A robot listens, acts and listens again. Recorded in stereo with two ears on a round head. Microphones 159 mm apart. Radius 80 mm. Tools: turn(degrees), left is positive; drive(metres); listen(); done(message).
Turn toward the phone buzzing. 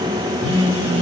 turn(degrees=-70)
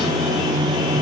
done("Found it: a phone buzzing, straight ahead.")